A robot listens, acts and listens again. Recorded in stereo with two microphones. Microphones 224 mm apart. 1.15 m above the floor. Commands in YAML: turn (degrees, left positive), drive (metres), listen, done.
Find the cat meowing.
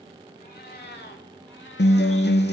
turn: 55
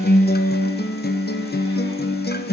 listen: true
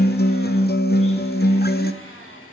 listen: true
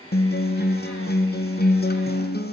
done: "I heard a cat meowing, but can't make it out now. It was about straight ahead or 70° left."